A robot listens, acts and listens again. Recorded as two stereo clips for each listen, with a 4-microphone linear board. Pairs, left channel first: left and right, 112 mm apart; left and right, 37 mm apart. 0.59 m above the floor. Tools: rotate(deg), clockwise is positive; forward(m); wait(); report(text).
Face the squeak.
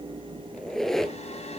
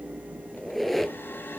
rotate(-30)
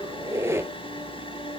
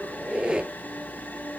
rotate(25)
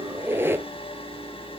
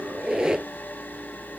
rotate(20)
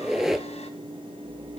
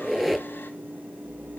report("Facing the squeak.")